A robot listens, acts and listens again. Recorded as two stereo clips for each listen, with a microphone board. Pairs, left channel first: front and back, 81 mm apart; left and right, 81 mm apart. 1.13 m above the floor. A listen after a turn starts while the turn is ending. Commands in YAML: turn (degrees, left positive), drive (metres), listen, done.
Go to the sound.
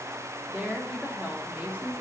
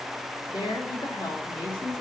turn: 110
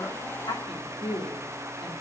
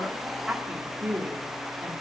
drive: 1.0
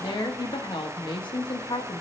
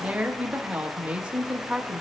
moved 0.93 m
turn: -15
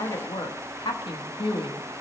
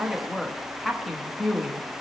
drive: 1.0
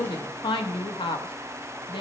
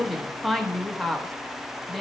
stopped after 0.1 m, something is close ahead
done: "Arrived at the woman speaking, straight ahead."